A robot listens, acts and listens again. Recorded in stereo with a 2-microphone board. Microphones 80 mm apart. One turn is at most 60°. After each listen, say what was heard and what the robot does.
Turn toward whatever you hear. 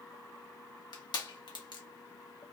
The crushing: about 60° left or 120° left. Turn 60° left.
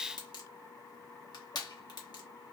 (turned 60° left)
So it is at 55° left. Turn 55° left.
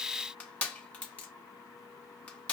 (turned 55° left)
The crushing is now 15° left. Turn 15° left.
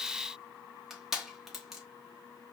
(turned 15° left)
Facing the crushing, under 1 m away.